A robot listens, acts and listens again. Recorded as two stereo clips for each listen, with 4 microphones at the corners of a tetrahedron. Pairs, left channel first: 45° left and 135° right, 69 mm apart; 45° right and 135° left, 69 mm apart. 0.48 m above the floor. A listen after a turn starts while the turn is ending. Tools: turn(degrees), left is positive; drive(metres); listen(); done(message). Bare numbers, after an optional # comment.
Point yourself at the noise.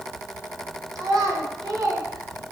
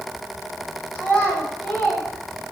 # The child speaking: 105° right.
turn(-105)
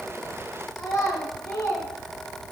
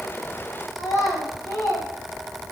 done("Facing the child speaking.")